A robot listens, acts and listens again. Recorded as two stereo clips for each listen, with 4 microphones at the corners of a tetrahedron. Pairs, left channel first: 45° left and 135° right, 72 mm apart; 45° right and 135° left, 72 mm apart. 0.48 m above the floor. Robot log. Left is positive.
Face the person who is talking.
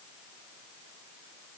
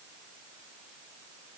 cmd idle
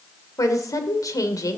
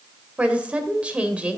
note: The woman speaking: 65° left.
cmd yaw +65
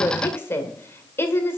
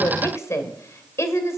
end: Facing the woman speaking, 1 to 2 m away.